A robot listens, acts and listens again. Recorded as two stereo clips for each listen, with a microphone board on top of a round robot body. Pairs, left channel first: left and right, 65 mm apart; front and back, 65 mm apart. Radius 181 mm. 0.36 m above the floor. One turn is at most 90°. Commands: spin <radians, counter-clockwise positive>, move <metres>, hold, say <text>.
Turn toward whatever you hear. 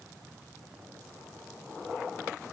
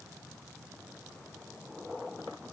hold
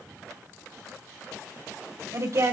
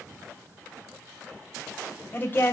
spin -0.96
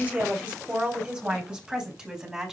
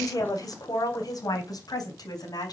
spin -0.26
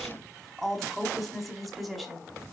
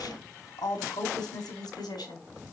say Facing the woman speaking, over 4 m away.